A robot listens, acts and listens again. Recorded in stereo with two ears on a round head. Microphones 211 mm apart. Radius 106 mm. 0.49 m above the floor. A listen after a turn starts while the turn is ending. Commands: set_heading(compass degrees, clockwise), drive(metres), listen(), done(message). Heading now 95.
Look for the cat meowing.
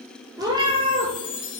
set_heading(120)
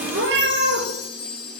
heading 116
set_heading(236)
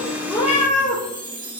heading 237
set_heading(202)
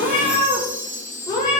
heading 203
set_heading(183)
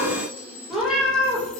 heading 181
done("Facing the cat meowing, 2 to 4 m away.")